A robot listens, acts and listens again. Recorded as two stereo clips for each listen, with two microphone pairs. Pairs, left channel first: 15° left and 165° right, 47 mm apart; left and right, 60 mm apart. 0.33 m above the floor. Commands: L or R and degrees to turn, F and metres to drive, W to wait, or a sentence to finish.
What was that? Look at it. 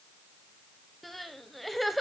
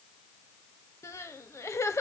L100
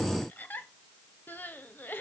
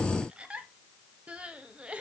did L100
R25
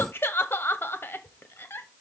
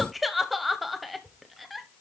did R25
Found it: crying, straight ahead, under 1 m away.